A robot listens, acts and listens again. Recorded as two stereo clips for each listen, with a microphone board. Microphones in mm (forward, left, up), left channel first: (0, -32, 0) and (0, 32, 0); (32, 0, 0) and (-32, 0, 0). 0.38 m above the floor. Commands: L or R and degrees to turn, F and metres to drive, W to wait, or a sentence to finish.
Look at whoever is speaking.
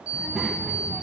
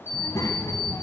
Facing the child speaking.